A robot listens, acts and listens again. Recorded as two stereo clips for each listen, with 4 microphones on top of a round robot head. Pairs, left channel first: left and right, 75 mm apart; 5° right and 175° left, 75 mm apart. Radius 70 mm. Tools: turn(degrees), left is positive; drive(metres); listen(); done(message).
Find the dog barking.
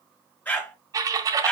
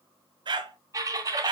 turn(degrees=170)
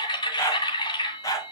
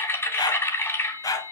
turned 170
turn(degrees=40)
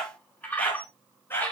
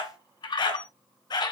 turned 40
turn(degrees=25)
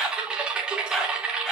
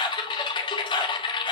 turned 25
done("Facing the dog barking.")